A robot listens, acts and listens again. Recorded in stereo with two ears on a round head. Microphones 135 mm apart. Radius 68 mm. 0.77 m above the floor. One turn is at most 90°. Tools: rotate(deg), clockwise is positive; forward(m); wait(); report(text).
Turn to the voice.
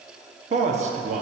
rotate(50)
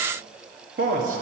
rotate(70)
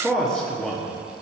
report("Found it: a man speaking, straight ahead, under 1 m away.")